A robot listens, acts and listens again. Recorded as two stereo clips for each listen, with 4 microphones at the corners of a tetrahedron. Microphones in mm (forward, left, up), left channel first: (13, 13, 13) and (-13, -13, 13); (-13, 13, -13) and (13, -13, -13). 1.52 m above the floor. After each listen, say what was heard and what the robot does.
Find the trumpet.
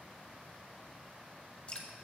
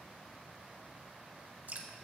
Keep listening.
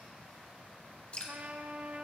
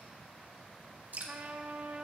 The trumpet: 90° right. Turn 90° right.
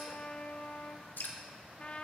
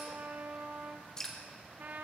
The trumpet is now 10° right. Turn 10° right.
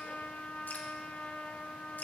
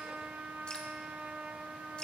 Facing the trumpet, 1 to 2 m away.